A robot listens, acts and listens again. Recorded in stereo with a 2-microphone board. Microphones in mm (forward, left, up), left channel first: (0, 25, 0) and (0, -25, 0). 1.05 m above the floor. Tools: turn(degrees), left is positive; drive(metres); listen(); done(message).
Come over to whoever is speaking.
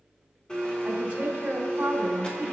turn(degrees=-30)
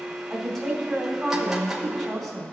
drive(metres=1.0)
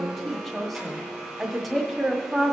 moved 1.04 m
drive(metres=1.0)
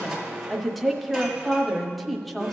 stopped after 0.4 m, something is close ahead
done("I am next to the woman speaking.")